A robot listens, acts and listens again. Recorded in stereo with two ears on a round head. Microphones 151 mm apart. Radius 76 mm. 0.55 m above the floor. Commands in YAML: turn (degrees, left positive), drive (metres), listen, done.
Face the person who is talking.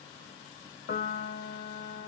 listen: true
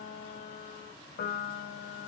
listen: true
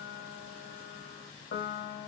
done: "I can't make out anyone speaking to turn to."